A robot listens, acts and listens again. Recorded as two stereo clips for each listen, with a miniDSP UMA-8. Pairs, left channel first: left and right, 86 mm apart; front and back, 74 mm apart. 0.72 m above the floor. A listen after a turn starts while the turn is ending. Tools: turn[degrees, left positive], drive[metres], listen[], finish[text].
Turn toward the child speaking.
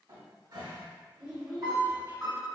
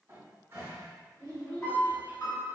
Thought: The child speaking: 15° right.
Action: turn[-15]
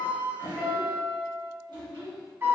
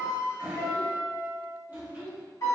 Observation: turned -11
Action: finish[Facing the child speaking, 1 to 2 m away.]